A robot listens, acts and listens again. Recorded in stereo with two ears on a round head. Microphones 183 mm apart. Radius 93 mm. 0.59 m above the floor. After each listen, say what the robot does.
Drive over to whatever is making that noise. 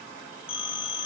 Turn 30° left.
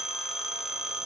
Drive 1.0 m forward.
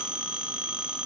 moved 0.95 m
Drive 1.0 m forward.
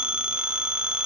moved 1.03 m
Drive 1.0 m forward.
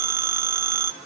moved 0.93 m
Turn 15° right.
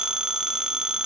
Drive 1.0 m forward.
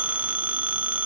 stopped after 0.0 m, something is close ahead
Turn 10° right.
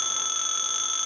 I am next to the phone ringing.